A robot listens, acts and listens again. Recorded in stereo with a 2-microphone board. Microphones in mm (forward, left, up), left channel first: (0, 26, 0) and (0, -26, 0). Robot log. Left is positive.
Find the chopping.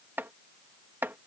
note: The chopping: about 40° right or 140° right.
cmd yaw -40
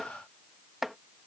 end: Facing the chopping.